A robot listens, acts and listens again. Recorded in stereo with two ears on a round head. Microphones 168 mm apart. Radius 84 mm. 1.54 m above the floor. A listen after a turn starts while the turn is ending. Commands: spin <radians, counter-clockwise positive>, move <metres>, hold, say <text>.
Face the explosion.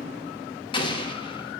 spin 0.44
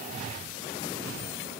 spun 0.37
hold
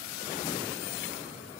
say I heard an explosion, but can't make it out now. It was about 5° left or 135° left.